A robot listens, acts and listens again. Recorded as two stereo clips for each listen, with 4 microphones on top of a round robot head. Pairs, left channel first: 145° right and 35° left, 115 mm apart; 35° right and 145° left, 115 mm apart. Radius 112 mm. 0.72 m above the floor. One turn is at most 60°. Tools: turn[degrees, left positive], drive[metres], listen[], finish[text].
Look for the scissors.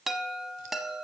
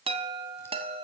Action: listen[]
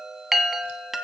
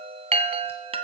Action: listen[]
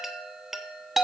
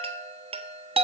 Action: finish[I can't make out scissors to turn to.]